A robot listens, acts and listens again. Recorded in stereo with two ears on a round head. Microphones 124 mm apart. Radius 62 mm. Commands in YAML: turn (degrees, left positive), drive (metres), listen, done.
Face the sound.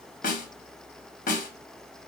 turn: 65
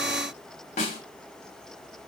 turn: 50
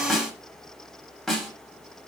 done: "Found it: a snare drum, straight ahead."